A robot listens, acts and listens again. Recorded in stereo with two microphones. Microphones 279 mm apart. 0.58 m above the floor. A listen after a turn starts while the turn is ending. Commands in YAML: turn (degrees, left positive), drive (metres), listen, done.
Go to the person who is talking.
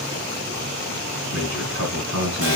turn: -70
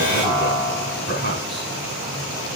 turn: -40
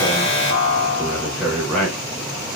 drive: 1.0
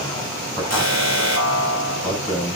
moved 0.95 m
turn: 10
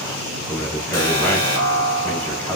drive: 1.0
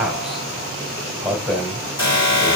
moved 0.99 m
drive: 1.0
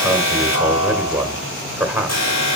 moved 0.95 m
turn: -10
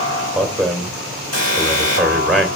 drive: 1.0
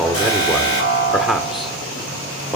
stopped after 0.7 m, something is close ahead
done: "I am next to the man speaking."